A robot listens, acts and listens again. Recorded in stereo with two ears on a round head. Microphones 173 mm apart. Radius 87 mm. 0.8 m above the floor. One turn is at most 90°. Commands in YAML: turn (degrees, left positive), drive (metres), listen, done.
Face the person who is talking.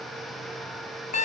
listen: true
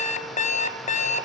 listen: true
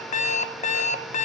done: "I can't make out anyone speaking to turn to."